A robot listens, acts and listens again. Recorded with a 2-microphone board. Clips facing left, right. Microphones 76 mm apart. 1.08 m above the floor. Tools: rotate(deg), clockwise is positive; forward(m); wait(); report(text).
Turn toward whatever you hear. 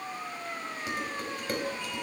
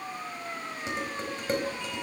rotate(25)
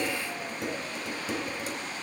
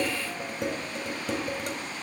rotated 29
rotate(125)
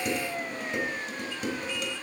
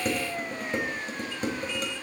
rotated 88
rotate(40)
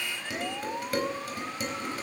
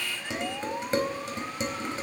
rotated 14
rotate(25)
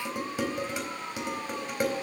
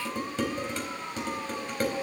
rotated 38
rotate(-10)
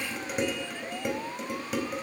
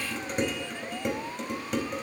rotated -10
report("Found it: dishes clattering, straight ahead.")